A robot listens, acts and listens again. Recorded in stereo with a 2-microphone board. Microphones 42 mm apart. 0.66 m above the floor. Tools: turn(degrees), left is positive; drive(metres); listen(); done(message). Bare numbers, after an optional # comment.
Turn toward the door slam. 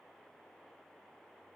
listen()
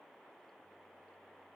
listen()
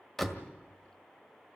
turn(30)
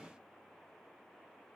listen()
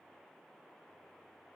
done("I heard a door slam, but can't make it out now. It was about 25° right or 145° left.")